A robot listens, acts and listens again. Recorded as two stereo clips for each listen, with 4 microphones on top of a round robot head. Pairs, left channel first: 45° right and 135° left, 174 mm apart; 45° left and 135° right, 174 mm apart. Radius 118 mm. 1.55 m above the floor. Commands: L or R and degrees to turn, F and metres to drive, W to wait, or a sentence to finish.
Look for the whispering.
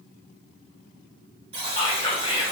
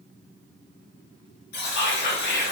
L15
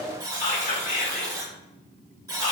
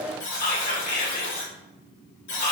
Found it: whispering, straight ahead, 1 to 2 m away.